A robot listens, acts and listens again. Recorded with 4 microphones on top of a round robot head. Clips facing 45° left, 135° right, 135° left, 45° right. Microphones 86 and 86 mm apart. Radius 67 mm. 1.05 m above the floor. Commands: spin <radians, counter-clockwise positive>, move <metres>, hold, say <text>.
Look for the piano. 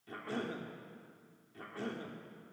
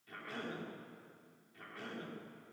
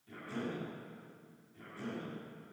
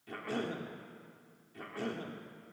hold
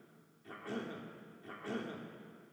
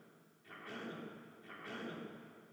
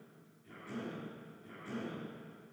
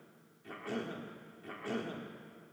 hold
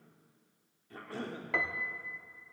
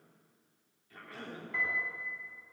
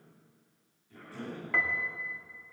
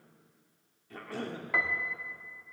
spin 0.61
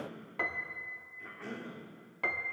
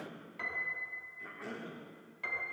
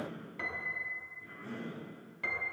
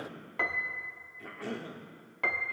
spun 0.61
say Facing the piano, 1 to 2 m away.